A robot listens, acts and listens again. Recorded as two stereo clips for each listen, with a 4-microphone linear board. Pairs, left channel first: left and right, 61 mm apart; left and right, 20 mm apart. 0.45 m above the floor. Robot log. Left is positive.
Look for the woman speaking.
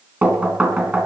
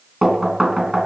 cmd idle
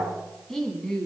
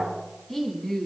cmd yaw +30
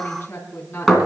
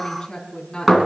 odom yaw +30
note: So it is at 145° left.
cmd yaw +145
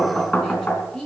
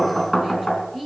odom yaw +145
note: The woman speaking is now 10° left.
cmd yaw +10
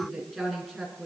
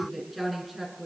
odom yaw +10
end: Facing the woman speaking, over 4 m away.